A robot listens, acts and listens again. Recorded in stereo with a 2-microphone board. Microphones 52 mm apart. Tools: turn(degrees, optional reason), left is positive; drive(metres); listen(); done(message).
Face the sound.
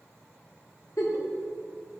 turn(degrees=90)
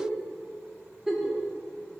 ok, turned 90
done("Found it: a giggle, straight ahead.")